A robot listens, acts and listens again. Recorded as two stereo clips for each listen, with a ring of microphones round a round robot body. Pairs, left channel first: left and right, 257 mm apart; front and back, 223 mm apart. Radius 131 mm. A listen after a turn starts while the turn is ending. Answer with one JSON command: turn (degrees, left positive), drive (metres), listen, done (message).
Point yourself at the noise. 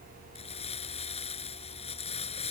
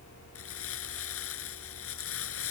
{"turn": 20}
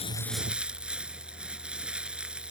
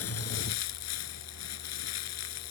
{"done": "Facing the crumpling."}